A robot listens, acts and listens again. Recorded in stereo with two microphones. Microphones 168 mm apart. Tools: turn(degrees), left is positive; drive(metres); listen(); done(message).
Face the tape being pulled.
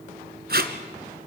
turn(degrees=-70)
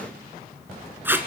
turn(degrees=-15)
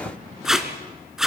done("Facing the tape being pulled, 1 to 2 m away.")